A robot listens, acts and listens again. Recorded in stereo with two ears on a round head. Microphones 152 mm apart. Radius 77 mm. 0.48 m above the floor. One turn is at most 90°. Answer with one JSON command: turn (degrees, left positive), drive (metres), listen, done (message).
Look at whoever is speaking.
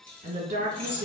{"turn": -45}
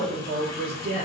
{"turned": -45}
{"turn": -80}
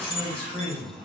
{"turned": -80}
{"turn": 10}
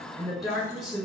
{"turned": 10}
{"done": "Facing the woman speaking, 1 to 2 m away."}